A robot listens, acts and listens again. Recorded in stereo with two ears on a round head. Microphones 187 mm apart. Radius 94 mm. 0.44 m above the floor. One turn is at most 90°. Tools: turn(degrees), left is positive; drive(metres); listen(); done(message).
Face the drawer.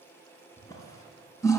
turn(degrees=20)
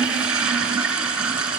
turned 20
listen()
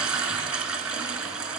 listen()
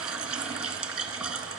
done("I heard a drawer, but can't make it out now. It was about straight ahead or 140° left.")